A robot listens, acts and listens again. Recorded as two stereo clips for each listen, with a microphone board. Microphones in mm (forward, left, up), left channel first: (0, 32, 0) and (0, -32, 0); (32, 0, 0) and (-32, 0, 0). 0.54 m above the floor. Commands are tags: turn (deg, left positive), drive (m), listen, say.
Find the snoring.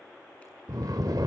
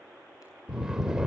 <turn deg="-100"/>
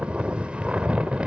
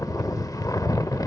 <turn deg="-20"/>
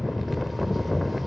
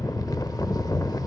<say>Facing the snoring, under 1 m away.</say>